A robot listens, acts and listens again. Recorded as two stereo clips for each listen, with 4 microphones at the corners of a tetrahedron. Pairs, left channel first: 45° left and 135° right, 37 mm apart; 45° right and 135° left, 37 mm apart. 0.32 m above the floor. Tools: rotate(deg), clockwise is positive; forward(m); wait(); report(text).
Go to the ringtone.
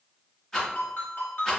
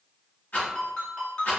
rotate(-20)
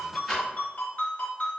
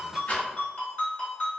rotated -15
forward(1.0)
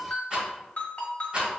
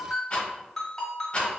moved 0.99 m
rotate(-25)
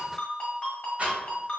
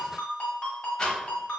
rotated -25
forward(1.0)
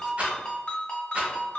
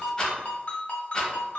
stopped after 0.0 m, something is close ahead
report("Arrived at the ringtone, straight ahead.")